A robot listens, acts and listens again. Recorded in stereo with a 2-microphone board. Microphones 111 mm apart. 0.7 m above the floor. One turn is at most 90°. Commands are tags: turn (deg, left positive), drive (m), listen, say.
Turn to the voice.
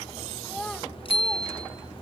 <turn deg="30"/>
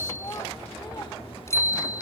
<turn deg="90"/>
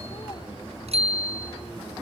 <turn deg="55"/>
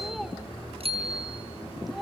<say>Facing the child speaking, 1 to 2 m away.</say>